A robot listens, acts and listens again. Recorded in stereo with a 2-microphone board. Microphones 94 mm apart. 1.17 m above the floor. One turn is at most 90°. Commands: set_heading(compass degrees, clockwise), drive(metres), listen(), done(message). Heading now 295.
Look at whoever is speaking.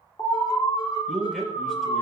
set_heading(265)
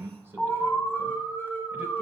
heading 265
set_heading(290)
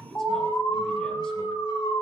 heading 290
done("Found it: a man speaking, straight ahead.")